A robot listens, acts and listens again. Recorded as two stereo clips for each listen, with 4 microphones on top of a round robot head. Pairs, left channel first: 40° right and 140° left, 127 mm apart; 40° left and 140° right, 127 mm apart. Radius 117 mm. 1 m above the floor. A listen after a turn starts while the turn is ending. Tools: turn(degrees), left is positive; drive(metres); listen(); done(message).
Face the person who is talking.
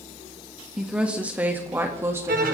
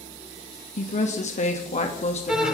turn(degrees=75)
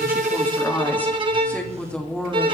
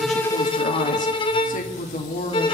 turn(degrees=45)
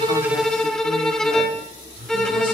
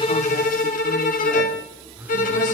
listen()
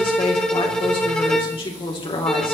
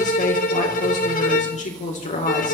turn(degrees=15)
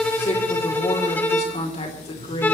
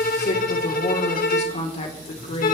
done("Facing the woman speaking, 2 to 4 m away.")